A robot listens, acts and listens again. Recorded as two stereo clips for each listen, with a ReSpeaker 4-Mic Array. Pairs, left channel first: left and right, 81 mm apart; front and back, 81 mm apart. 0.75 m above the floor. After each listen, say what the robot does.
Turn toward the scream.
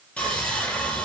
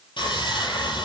Keep listening.
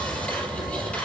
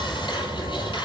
Keep listening.
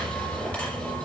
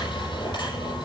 I can't make out a scream, only sawing.